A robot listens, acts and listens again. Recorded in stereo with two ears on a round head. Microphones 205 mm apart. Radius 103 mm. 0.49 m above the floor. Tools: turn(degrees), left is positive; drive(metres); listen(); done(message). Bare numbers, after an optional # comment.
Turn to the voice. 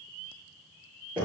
listen()
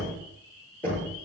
listen()
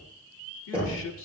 # The man speaking: about 55° left or 125° left.
turn(55)
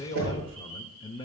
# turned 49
# So it is at 25° left.
turn(25)
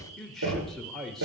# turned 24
done("Found it: a man speaking, straight ahead, 1 to 2 m away.")